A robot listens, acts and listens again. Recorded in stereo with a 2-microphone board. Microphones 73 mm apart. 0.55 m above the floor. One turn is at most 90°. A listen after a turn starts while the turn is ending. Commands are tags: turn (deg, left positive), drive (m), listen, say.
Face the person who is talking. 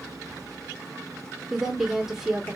<turn deg="-30"/>
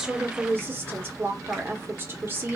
<turn deg="-90"/>
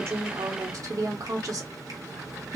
<turn deg="-80"/>
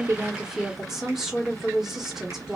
<turn deg="-10"/>
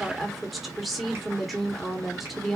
<say>Facing the woman speaking, 1 to 2 m away.</say>